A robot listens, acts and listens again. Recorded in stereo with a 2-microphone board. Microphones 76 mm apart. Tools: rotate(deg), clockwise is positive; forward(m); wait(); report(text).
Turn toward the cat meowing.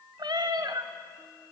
rotate(70)
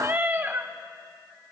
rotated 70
rotate(40)
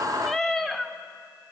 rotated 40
report("Found it: a cat meowing, straight ahead.")